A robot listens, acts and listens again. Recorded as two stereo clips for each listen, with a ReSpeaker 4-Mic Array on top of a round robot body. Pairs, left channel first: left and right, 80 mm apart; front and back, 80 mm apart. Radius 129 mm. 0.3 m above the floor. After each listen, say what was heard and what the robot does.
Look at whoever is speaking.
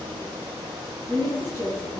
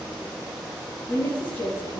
The woman speaking: 70° right. Turn 70° right.
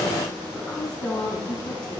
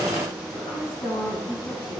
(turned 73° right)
The woman speaking is now 10° left. Turn 10° left.
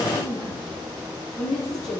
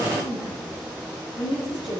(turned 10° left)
Facing the woman speaking.